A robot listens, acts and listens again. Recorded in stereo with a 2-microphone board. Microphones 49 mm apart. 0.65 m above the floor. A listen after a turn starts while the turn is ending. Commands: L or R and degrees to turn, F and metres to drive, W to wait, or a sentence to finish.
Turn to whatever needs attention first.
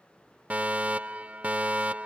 R25
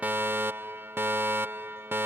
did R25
R125
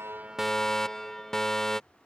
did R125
L10
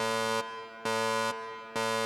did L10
Found it: a fire alarm, straight ahead.